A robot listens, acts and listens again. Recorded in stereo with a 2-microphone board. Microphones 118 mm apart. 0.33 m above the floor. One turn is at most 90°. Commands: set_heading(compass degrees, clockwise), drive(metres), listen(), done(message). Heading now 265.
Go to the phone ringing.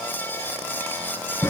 listen()
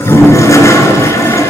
listen()
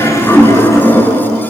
done("I can't make out a phone ringing to turn to.")